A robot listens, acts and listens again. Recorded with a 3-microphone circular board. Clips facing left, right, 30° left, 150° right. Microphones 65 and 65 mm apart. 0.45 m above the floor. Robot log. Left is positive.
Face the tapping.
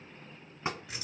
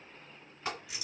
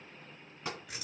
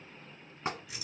note: The tapping: 155° left.
cmd yaw +155
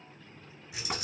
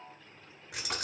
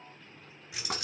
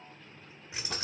cmd idle
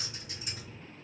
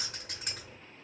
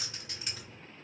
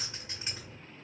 cmd idle
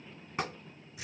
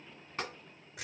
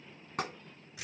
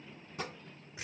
note: The tapping is now 15° left.
cmd yaw +15
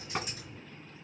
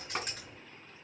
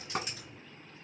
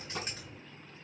end: Found it: tapping, straight ahead.